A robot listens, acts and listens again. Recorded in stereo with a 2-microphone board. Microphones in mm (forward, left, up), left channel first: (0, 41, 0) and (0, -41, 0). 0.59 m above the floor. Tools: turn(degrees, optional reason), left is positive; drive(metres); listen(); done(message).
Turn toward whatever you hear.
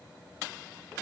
listen()
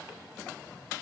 listen()
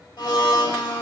turn(degrees=65, reason="The blender: about 65° left or 115° left.")
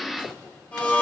turn(degrees=25, reason="So it is at 25° left.")
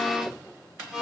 done("Facing the blender, 1 to 2 m away.")